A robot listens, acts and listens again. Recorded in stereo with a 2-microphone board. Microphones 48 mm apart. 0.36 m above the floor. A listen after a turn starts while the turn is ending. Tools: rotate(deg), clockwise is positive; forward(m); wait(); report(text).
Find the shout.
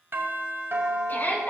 rotate(-40)
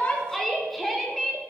report("Facing the shout, 2 to 4 m away.")